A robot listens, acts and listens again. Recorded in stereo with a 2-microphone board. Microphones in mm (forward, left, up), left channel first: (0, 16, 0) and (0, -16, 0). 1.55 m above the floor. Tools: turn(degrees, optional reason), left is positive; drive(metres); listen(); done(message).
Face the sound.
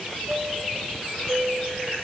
turn(degrees=-60, reason="The chime: about 60° right or 120° right.")
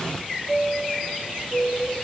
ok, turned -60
done("Facing the chime.")